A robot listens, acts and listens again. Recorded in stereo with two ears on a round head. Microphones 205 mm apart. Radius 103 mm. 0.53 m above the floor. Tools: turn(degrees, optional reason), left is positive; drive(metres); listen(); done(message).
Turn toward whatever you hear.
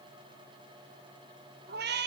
turn(degrees=-50, reason="The cat meowing: about 50° right or 130° right.")
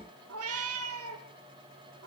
turn(degrees=-60, reason="So it is at 60° right.")
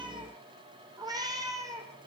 turn(degrees=-15, reason="The cat meowing is now 15° right.")
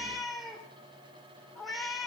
done("Found it: a cat meowing, straight ahead, 2 to 4 m away.")